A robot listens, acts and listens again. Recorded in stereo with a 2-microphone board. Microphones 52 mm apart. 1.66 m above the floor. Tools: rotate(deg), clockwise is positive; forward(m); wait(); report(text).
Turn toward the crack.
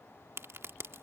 rotate(65)
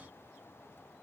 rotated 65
wait()
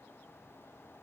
report("I heard a crack, but can't make it out now. It was about straight ahead or 50° right.")